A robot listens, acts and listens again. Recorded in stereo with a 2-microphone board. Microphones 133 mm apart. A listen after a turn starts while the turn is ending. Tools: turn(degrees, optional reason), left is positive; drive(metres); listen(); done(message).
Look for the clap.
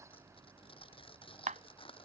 turn(degrees=-70, reason="The clap: about 70° right or 110° right.")
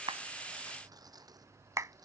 turn(degrees=-25, reason="So it is at 25° right.")
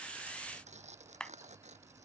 done("Found it: a clap, straight ahead.")